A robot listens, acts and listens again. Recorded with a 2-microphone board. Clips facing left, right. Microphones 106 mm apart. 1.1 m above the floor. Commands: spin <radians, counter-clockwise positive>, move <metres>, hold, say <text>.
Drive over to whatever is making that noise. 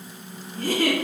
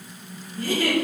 spin 0.96
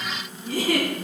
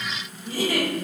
spin 1.22
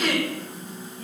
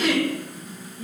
spin -0.26
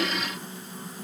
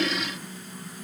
hold
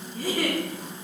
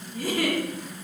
move 1.0
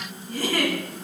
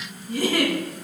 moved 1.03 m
spin -0.17
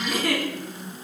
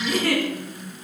move 1.0
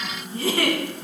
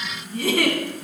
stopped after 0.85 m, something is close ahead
say Arrived at the giggle, straight ahead.